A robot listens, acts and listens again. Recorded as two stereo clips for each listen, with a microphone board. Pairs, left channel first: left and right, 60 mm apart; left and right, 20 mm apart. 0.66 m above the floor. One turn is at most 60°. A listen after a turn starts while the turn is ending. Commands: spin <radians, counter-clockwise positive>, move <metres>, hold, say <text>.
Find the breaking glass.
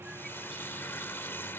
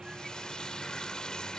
hold
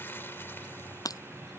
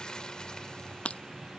spin 1.05
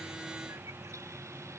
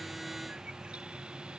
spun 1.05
spin 0.52
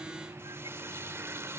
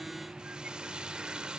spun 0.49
say Facing where the breaking glass came from. I can't hear it now.